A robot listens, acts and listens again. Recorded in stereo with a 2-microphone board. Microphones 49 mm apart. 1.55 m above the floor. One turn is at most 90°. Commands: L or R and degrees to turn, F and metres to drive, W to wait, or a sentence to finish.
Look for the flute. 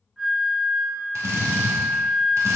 L30
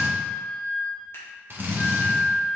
L90
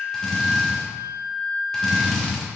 L90
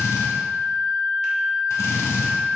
L15
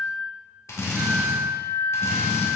Found it: a flute, straight ahead.